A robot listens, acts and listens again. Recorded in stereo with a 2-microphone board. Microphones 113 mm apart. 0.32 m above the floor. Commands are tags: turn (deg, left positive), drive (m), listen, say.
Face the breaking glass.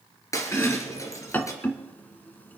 <turn deg="25"/>
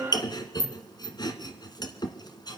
<listen/>
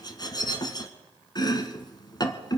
<say>I heard breaking glass, but can't make it out now. It was about straight ahead or 130° left.</say>